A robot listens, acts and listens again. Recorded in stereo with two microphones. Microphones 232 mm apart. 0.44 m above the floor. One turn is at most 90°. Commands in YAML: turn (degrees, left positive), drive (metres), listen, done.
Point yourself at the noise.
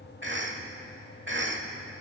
turn: -55
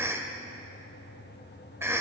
turn: -10
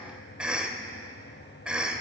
done: "Facing the cough."